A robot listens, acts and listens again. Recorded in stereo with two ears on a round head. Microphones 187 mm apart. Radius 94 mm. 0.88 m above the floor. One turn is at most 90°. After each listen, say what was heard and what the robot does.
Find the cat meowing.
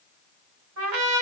Keep listening.
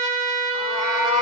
Turn 30° right.
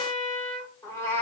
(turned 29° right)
So it is at 10° left. Turn 10° left.
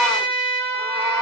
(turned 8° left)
The cat meowing is now 15° right. Turn 15° right.
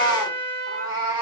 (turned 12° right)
The cat meowing is now 25° right. Turn 25° right.
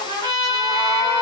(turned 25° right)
The cat meowing is now 10° right. Turn 10° right.
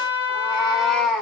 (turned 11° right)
Found it: a cat meowing, straight ahead, 1 to 2 m away.